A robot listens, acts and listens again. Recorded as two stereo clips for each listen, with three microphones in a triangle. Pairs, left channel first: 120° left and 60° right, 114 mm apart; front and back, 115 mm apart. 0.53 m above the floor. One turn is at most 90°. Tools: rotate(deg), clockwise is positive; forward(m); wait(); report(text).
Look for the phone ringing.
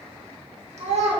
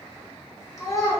wait()
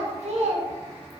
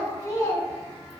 wait()
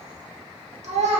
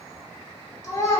report("I can't make out a phone ringing to turn to.")